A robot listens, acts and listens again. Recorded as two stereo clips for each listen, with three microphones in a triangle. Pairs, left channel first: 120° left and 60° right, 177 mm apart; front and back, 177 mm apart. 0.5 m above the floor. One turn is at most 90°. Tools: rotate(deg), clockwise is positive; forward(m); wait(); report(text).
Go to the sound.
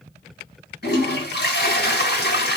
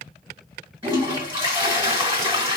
rotate(-90)
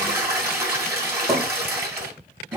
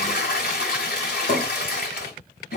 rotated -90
rotate(-15)
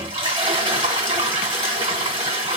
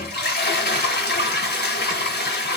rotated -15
forward(1.0)
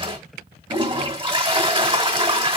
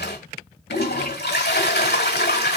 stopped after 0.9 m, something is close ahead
report("Arrived at the toilet flushing, straight ahead.")